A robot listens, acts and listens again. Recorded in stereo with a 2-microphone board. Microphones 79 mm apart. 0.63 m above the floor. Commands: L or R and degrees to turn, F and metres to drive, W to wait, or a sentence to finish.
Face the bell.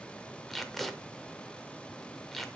W
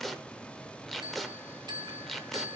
R65
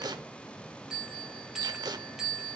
Facing the bell.